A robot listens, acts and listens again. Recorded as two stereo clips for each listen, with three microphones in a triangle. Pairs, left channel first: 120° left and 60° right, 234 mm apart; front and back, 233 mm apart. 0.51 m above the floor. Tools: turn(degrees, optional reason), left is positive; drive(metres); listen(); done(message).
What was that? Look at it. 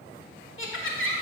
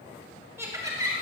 turn(degrees=110, reason="The laughter: 110° left.")
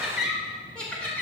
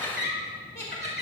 turn(degrees=40, reason="The laughter is now 40° left.")
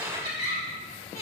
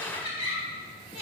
turn(degrees=10, reason="The laughter is now 10° left.")
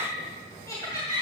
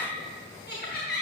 turn(degrees=10, reason="The laughter is now 10° left.")
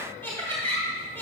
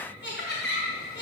done("Found it: laughter, straight ahead.")